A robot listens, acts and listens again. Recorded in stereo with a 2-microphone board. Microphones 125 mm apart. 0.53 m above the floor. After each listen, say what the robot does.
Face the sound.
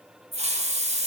Turn 60° right.
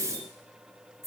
Turn 25° right.
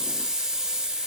Facing the hiss, 1 to 2 m away.